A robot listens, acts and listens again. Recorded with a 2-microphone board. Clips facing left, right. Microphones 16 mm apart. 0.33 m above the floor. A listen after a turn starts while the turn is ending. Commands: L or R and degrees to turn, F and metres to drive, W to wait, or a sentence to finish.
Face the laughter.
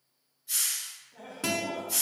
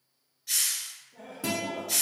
L40
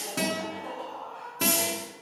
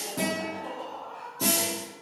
R20
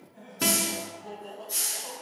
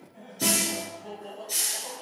R25
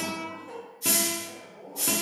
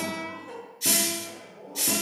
R15
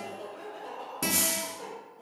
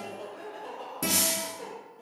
Facing the laughter.